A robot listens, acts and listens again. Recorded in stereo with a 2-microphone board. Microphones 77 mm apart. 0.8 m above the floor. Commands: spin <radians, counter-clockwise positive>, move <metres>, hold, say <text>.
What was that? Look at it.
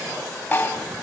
spin 0.52
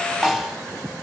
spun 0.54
say Facing the snare drum.